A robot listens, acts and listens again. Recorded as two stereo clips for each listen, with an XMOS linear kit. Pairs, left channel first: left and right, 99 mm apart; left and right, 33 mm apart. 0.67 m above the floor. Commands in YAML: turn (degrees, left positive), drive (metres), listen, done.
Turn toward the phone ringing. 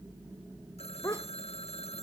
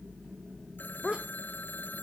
turn: 90
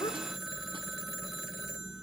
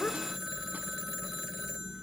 done: "Facing the phone ringing."